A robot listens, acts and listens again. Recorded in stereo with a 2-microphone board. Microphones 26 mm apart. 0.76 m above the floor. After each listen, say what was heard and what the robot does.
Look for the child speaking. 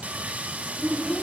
Turn 30° left.
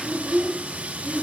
So it is at 15° right. Turn 15° right.
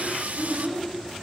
Found it: a child speaking, straight ahead, over 4 m away.